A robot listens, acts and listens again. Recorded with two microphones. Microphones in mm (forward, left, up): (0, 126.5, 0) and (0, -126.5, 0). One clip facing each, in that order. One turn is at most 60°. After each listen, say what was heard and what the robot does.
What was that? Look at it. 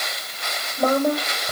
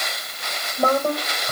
Turn 30° left.
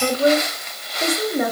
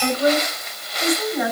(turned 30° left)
So it is at 135° left. Turn 60° left.
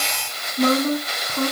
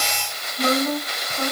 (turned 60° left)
The woman speaking is now 60° left. Turn 60° left.
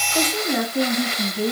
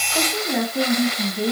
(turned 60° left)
Facing the woman speaking.